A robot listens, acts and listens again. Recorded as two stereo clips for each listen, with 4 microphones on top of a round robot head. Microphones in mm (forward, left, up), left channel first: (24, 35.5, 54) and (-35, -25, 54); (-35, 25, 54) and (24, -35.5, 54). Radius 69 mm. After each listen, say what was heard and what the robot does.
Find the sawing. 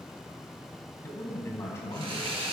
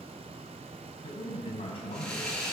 The sawing: 145° right. Turn 145° right.
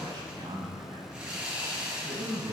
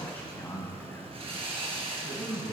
The sawing is now 55° right. Turn 55° right.
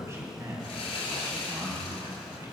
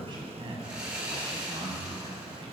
The sawing is now 30° left. Turn 30° left.
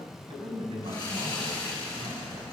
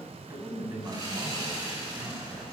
Facing the sawing.